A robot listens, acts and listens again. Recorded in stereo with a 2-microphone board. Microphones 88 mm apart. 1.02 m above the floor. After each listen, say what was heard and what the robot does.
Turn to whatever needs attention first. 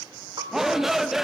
Turn 30° right.
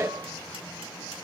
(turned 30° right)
So it is at 145° right. Turn 145° right.
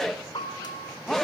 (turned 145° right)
Facing the shout.